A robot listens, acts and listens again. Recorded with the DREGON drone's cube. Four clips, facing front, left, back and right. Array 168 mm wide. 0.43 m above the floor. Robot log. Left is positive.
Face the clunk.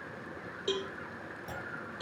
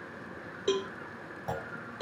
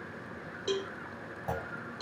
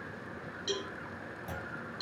note: The clunk: 140° left.
cmd yaw +140
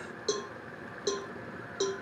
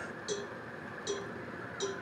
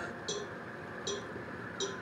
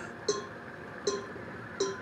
end: I heard a clunk from this way, but can't make it out now.